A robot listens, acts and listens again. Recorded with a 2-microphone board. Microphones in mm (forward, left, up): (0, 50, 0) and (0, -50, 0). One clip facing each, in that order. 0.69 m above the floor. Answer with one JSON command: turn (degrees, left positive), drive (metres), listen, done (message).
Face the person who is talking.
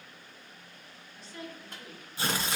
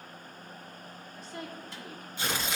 {"turn": -45}
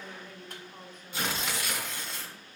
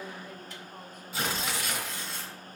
{"turn": -10}
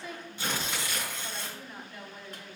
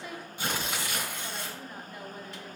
{"done": "Found it: a woman speaking, straight ahead, 1 to 2 m away."}